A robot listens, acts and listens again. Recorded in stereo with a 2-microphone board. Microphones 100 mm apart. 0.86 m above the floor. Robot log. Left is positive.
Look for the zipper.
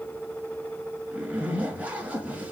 cmd yaw -30
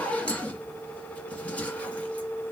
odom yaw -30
note: So it is at 15° left.
cmd yaw +15
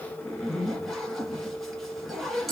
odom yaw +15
end: Found it: a zipper, straight ahead.